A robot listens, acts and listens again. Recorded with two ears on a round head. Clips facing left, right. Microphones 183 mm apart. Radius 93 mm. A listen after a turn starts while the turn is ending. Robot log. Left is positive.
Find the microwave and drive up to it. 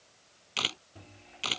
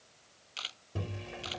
cmd yaw -90
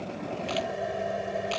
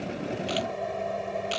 cmd fwd 1.0
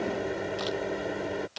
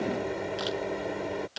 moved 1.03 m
cmd fwd 1.0
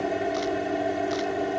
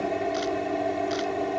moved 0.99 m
cmd fwd 1.0
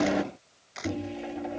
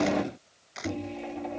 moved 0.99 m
cmd fwd 1.0
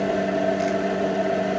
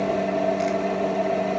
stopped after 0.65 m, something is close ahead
note: The microwave is now 10° left.
cmd yaw +10
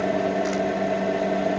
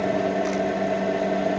end: Arrived at the microwave, straight ahead.